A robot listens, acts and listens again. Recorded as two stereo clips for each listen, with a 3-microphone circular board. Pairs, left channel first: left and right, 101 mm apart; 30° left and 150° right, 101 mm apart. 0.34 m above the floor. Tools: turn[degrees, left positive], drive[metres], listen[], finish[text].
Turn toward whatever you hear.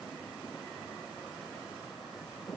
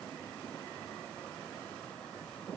Action: listen[]
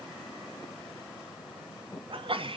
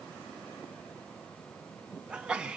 Thought: The sneeze: 70° right.
Action: turn[-70]
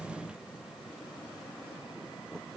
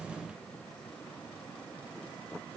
Action: finish[Facing where the sneeze came from. I can't hear it now.]